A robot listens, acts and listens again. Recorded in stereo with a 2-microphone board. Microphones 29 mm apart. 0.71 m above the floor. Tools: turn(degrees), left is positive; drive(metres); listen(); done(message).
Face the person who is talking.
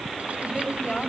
turn(degrees=25)
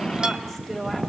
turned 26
done("Facing the woman speaking.")